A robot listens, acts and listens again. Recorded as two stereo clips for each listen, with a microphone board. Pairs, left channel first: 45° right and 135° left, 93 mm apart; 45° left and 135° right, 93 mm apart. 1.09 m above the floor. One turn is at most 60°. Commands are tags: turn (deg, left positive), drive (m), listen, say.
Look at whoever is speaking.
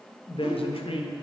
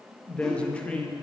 <turn deg="-35"/>
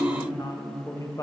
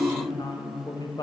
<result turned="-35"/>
<say>Facing the woman speaking.</say>